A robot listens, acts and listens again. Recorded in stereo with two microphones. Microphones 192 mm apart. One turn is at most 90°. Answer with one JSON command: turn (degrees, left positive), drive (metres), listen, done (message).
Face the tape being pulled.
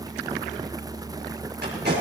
{"turn": -60}
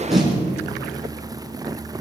{"done": "Facing the tape being pulled."}